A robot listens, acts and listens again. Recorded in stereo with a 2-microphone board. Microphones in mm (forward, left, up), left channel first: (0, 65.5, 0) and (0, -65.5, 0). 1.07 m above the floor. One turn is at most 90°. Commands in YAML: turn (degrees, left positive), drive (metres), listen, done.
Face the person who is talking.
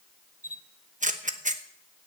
listen: true
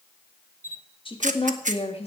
turn: 50
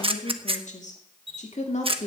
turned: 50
turn: 60
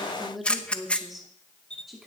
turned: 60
done: "Found it: a woman speaking, straight ahead, 2 to 4 m away."